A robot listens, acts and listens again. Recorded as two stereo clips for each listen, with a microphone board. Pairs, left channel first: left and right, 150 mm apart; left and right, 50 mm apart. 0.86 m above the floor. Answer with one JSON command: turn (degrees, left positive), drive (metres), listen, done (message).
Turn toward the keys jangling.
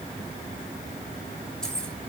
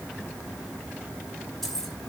{"turn": 30}
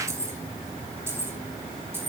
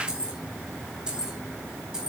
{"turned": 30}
{"turn": -15}
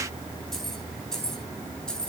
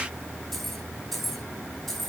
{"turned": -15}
{"done": "Found it: keys jangling, straight ahead."}